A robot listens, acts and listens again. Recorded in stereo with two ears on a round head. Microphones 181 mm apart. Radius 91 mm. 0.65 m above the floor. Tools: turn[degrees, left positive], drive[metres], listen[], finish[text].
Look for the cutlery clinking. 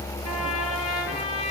Action: listen[]
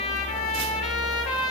Action: listen[]
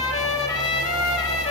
Action: finish[I can't make out cutlery clinking to turn to.]